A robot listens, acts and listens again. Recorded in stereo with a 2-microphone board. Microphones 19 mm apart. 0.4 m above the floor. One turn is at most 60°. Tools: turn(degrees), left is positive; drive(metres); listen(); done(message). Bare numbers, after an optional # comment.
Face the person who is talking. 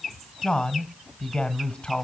# The man speaking: about 45° left or 135° left.
turn(45)
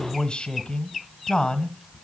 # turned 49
# So it is at 80° left.
turn(60)
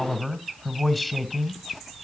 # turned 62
# The man speaking is now 15° left.
turn(15)
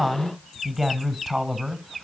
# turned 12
done("Found it: a man speaking, straight ahead.")